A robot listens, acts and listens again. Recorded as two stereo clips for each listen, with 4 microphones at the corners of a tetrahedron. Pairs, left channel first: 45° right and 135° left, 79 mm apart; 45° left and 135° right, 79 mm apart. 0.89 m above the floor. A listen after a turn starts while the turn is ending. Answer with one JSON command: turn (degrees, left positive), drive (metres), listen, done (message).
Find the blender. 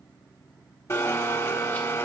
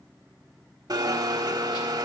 {"turn": -95}
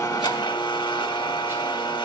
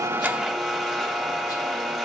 {"turn": -45}
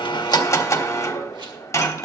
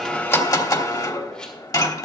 {"done": "Found it: a blender, straight ahead, 1 to 2 m away."}